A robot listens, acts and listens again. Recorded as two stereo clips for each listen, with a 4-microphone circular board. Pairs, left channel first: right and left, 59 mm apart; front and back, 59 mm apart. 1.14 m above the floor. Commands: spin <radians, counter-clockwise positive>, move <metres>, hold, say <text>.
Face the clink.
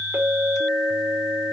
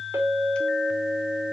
spin 2.36
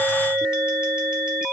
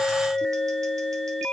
spin 0.26
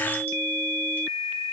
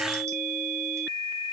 hold
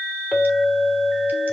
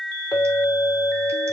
say Found it: a clink, straight ahead.